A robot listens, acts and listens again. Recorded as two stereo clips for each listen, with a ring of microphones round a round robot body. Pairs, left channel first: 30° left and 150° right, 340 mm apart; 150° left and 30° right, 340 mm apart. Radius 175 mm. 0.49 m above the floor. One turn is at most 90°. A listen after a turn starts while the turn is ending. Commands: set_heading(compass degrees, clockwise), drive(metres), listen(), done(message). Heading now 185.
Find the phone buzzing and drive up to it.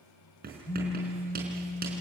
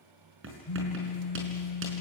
set_heading(95)
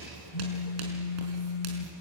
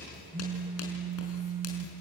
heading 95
set_heading(70)
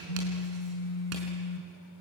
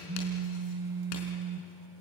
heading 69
drive(1.0)
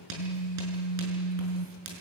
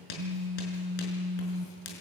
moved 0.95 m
drive(1.0)
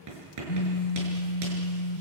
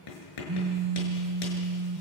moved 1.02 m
drive(1.0)
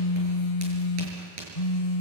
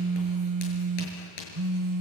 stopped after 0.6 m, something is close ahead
done("Arrived at the phone buzzing, straight ahead.")